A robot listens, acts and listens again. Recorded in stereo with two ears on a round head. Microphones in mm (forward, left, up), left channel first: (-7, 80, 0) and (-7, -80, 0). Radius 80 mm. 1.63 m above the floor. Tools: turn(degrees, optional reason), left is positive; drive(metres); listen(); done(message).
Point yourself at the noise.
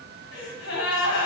turn(degrees=90)
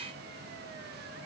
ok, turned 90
done("I heard a gasp from this way, but can't make it out now.")